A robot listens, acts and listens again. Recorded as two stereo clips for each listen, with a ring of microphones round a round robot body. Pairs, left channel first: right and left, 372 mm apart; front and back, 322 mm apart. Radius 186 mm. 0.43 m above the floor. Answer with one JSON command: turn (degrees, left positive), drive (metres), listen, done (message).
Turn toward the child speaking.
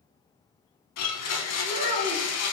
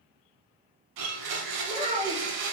{"turn": 110}
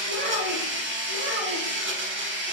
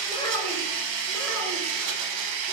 {"listen": true}
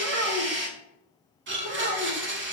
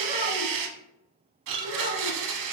{"turn": 120}
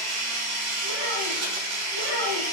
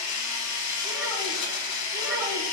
{"listen": true}
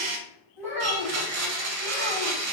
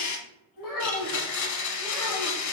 {"done": "Facing the child speaking, 2 to 4 m away."}